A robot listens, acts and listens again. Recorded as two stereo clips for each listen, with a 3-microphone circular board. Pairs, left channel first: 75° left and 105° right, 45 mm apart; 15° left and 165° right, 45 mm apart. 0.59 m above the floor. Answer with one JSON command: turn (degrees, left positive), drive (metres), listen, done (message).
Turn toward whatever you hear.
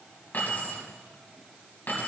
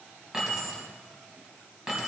{"turn": 115}
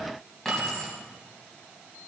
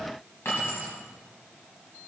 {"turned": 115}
{"done": "Facing the keys jangling."}